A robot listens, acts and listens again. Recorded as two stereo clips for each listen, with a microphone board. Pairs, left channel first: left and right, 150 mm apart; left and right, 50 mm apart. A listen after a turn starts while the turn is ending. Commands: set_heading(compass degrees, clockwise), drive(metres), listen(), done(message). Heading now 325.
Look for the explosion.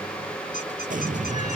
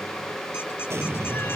set_heading(30)
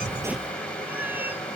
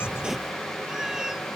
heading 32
listen()
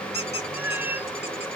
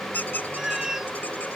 done("I heard an explosion, but can't make it out now. It was about 5° left or 50° right.")